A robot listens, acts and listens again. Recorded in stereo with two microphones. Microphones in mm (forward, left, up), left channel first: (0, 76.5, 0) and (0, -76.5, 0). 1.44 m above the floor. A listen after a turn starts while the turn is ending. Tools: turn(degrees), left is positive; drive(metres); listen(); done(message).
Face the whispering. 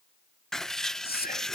turn(degrees=90)
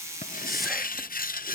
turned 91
listen()
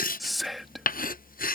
done("Facing the whispering.")